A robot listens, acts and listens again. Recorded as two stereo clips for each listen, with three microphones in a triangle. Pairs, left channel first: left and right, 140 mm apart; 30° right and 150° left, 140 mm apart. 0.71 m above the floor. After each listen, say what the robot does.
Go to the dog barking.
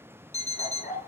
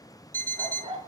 Turn 105° left.
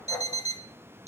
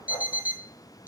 Turn 10° left.
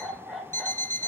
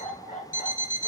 Drive 1.0 m forward.
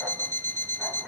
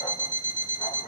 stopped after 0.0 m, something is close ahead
Blocked. The dog barking is further on, straight ahead.